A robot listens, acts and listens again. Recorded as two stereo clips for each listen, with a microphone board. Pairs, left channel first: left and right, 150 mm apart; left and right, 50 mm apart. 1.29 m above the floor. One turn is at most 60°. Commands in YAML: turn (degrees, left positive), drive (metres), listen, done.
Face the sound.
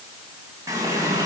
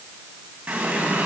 turn: -20
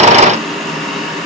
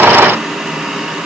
done: "Found it: a running tap, straight ahead."